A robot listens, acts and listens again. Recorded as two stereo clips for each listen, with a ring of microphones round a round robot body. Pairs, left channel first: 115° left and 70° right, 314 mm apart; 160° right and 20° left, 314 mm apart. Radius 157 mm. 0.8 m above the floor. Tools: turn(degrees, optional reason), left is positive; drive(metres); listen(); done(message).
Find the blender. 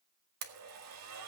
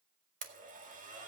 turn(degrees=-40, reason="The blender: 40° right.")
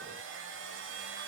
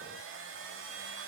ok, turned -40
turn(degrees=-20, reason="The blender is now 20° right.")
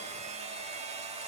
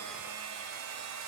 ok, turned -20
done("Found it: a blender, straight ahead, 1 to 2 m away.")